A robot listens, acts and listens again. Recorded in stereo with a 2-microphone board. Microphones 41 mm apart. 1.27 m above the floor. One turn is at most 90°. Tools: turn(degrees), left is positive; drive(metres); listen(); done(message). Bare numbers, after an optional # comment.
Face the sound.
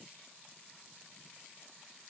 listen()
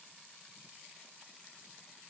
listen()
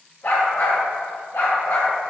# The dog barking: about 70° left or 110° left.
turn(70)
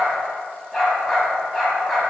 done("Found it: a dog barking, straight ahead, 2 to 4 m away.")